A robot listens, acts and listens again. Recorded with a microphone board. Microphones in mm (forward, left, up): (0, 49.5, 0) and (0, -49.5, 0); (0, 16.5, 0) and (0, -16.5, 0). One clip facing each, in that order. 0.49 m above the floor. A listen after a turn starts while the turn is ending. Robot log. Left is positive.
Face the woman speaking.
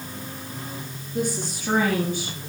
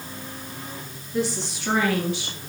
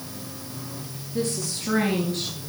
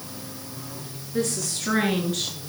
cmd yaw -90
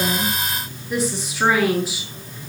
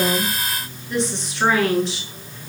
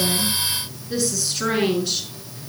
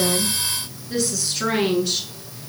end: Facing the woman speaking.